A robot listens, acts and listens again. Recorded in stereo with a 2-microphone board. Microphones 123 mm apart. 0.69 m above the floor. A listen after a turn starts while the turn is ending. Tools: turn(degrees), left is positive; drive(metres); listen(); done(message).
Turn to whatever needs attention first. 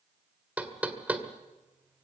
listen()
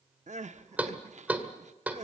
turn(degrees=-65)
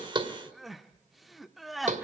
done("Found it: crying, straight ahead, under 1 m away.")